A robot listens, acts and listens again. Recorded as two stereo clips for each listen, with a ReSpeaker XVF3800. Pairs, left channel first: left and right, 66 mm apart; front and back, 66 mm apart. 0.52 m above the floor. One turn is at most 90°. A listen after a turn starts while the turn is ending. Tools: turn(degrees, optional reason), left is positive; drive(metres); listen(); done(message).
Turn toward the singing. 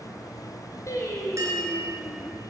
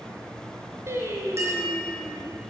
turn(degrees=90, reason="The singing: 125° left.")
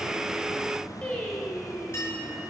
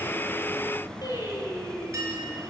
turn(degrees=10, reason="The singing is now 10° left.")
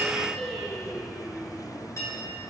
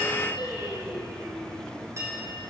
done("Facing the singing.")